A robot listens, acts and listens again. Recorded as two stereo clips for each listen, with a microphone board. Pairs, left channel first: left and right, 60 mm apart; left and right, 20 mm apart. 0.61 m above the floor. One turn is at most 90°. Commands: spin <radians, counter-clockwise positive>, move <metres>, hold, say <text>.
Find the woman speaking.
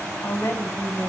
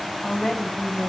spin 0.87
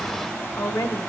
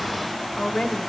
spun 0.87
spin 1.13
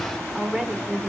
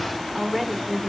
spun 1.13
say Facing the woman speaking, 1 to 2 m away.